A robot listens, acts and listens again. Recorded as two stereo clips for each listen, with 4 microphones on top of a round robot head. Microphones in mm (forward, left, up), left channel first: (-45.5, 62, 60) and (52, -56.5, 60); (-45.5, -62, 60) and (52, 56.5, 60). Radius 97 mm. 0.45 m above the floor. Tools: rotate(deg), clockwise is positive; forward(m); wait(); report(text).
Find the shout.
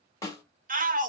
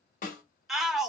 rotate(40)
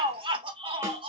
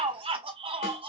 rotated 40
report("Found it: a shout, straight ahead.")